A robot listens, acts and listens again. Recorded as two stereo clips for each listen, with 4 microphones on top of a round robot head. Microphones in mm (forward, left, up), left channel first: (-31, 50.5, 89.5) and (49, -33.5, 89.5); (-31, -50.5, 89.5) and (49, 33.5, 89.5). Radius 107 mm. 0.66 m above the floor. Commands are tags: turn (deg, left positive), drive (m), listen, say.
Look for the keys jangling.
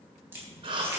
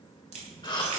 <turn deg="25"/>
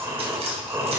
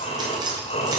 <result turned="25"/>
<turn deg="-10"/>
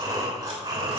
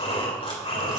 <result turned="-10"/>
<listen/>
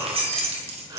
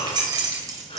<turn deg="-15"/>
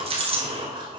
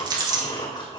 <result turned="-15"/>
<turn deg="-10"/>
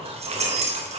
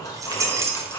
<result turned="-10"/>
<turn deg="-25"/>
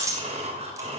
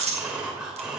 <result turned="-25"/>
<turn deg="15"/>
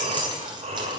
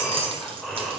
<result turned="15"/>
<say>Found it: keys jangling, straight ahead, 1 to 2 m away.</say>